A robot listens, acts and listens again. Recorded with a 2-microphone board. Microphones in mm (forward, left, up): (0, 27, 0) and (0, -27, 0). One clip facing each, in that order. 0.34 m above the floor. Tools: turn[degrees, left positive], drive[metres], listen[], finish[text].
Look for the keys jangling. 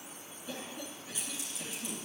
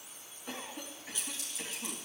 Action: turn[30]
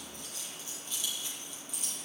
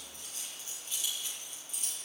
Thought: So it is at 35° right.
Action: turn[-35]
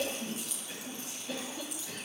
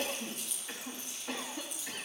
Action: finish[Found it: keys jangling, straight ahead, over 4 m away.]